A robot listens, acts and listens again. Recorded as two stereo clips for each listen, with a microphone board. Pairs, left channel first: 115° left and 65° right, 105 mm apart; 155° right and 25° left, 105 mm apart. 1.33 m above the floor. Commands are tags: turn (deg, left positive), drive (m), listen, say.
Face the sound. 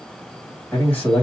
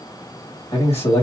<turn deg="-175"/>
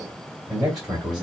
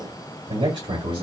<turn deg="15"/>
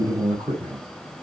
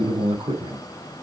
<say>Facing the man speaking, 2 to 4 m away.</say>